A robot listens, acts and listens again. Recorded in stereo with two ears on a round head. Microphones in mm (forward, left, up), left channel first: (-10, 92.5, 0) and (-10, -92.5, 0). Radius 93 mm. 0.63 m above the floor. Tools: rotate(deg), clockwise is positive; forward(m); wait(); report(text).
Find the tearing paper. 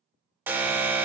wait()
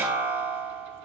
wait()
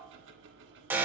report("I can't make out tearing paper, only an alarm and ticking.")